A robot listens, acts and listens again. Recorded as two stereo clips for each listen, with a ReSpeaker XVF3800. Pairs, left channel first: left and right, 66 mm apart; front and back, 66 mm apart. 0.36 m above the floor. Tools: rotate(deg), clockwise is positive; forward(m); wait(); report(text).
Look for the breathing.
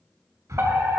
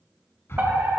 rotate(50)
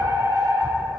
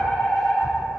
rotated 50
wait()
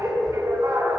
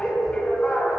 wait()
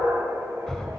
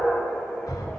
report("Facing the breathing, 1 to 2 m away.")